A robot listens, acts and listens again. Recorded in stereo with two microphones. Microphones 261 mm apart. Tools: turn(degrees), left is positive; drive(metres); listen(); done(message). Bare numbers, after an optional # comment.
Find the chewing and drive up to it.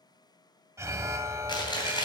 # The chewing: about 15° left or 165° left.
turn(15)
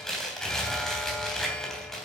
drive(1.0)
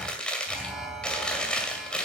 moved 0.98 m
drive(1.0)
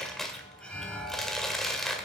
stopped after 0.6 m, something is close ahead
done("I am next to the chewing.")